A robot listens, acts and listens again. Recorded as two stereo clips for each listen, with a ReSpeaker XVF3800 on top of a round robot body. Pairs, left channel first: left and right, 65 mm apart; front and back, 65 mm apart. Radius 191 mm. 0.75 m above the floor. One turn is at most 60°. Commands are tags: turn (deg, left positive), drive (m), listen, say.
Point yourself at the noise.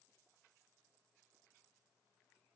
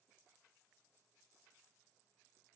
<listen/>
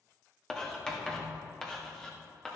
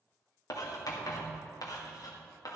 <turn deg="10"/>
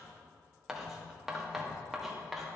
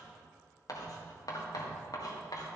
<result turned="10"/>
<say>Found it: writing, straight ahead, 2 to 4 m away.</say>